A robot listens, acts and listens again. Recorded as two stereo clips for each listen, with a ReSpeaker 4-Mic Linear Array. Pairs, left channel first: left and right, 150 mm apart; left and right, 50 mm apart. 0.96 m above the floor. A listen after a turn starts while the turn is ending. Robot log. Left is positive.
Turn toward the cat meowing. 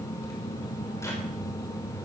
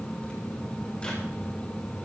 cmd idle
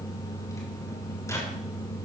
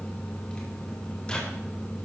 cmd idle
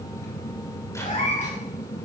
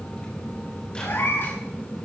note: The cat meowing: about 55° left or 125° left.
cmd yaw +55
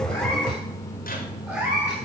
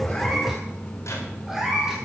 note: So it is at 10° right.
cmd yaw -10
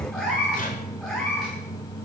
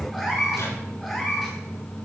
end: Found it: a cat meowing, straight ahead, over 4 m away.